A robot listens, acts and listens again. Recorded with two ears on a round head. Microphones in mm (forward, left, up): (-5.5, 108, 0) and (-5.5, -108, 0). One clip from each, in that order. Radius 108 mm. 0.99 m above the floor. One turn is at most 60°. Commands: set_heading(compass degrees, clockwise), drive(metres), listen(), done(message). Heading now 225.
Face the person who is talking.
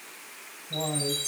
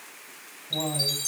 set_heading(275)
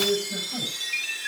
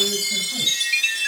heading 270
listen()
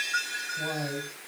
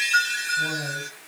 done("Facing the man speaking, over 4 m away.")